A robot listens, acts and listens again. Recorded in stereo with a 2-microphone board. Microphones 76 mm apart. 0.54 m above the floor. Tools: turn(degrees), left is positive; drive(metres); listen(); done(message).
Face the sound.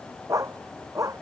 turn(degrees=-45)
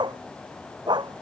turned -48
turn(degrees=-90)
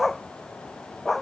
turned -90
done("Facing the dog barking.")